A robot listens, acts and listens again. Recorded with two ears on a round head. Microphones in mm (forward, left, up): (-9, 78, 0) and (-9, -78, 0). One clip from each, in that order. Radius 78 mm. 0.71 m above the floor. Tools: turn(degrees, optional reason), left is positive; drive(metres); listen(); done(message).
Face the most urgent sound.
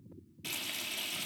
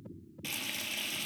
listen()
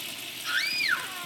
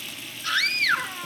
turn(degrees=-25, reason="The scream: about 25° right or 155° right.")
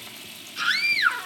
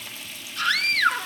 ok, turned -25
done("Found it: a scream, straight ahead.")